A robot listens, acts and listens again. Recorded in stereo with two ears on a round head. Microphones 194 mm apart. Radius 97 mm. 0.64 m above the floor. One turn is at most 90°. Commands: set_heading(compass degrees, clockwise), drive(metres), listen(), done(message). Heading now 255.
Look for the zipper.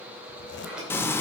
set_heading(200)
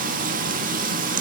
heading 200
listen()
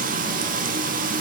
listen()
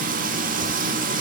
done("I heard a zipper, but can't make it out now. It was about straight ahead or 70° left.")